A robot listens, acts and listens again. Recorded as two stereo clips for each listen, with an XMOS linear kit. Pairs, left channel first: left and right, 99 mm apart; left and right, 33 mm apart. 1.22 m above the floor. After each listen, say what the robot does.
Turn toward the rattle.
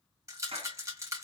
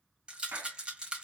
Turn 35° right.
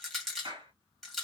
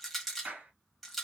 Found it: a rattle, straight ahead.